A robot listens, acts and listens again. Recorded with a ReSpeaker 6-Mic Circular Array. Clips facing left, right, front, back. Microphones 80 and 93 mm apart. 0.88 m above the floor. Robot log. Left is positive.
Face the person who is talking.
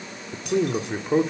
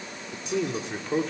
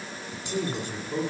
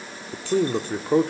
note: The man speaking: 160° left.
cmd yaw +160
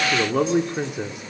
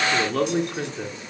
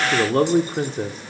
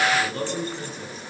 note: The man speaking is now 15° left.
cmd yaw +15
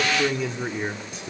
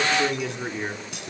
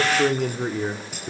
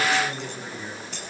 end: Found it: a man speaking, straight ahead, 1 to 2 m away.